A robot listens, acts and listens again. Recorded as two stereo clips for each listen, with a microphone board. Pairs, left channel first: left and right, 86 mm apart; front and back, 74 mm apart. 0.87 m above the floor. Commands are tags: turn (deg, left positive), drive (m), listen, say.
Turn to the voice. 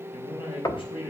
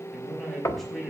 <turn deg="90"/>
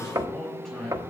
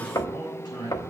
<say>Facing the man speaking.</say>